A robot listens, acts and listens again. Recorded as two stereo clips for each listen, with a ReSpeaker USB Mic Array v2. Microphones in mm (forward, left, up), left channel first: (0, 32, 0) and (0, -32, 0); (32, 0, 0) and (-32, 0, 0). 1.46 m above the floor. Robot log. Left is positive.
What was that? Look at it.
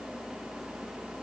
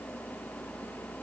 cmd idle
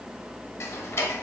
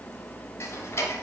note: The ticking: 45° left.
cmd yaw +45
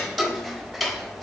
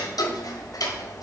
end: Found it: ticking, straight ahead, under 1 m away.